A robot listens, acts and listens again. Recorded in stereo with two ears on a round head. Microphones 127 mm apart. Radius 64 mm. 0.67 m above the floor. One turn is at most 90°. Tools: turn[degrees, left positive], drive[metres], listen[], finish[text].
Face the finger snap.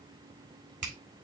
Thought: The finger snap: about 60° right or 120° right.
Action: turn[-60]
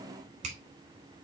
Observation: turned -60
Thought: So it is at 55° right.
Action: turn[-55]
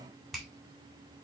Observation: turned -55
Action: finish[Found it: a finger snap, straight ahead.]